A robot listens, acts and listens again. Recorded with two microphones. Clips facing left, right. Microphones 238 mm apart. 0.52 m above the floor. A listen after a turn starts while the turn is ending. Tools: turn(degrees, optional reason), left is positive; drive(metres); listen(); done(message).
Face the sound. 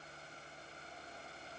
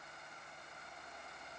listen()
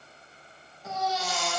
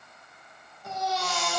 turn(degrees=30)
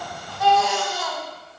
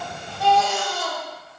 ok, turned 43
turn(degrees=-40, reason="So it is at 40° right.")
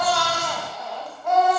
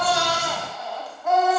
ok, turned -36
done("Found it: a baby crying, straight ahead.")